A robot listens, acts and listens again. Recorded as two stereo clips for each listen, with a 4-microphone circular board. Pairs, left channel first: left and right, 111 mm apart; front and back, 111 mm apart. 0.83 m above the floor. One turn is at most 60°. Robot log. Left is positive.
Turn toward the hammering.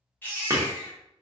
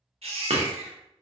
note: The hammering: 150° right.
cmd yaw -60
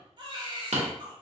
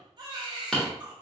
note: The hammering is now 85° right.
cmd yaw -60
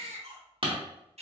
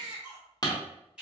note: The hammering is now 55° right.
cmd yaw -55
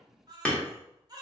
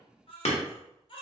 note: The hammering is now 10° left.
cmd yaw +10
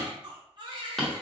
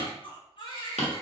end: Facing the hammering.